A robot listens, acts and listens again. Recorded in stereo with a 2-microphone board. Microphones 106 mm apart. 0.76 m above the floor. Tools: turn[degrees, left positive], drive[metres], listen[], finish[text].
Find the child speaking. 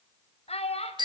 Action: turn[90]
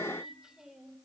Action: finish[Found it: a child speaking, straight ahead.]